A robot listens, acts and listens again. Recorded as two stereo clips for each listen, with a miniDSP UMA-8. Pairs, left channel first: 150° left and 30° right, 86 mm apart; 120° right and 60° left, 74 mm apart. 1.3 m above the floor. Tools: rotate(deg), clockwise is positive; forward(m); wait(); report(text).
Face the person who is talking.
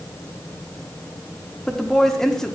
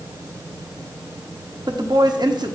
rotate(-65)
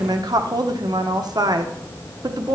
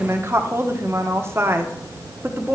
rotate(-10)
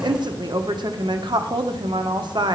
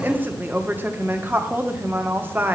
report("Found it: a woman speaking, straight ahead.")